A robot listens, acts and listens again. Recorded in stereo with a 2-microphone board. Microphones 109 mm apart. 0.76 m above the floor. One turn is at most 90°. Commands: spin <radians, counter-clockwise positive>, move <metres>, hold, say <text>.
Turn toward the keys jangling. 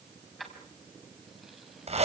spin 0.52
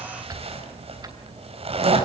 hold
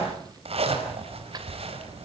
hold
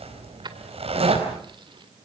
spin -0.79
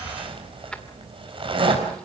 hold
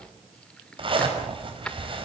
spin 0.17
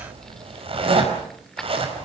say Facing the keys jangling.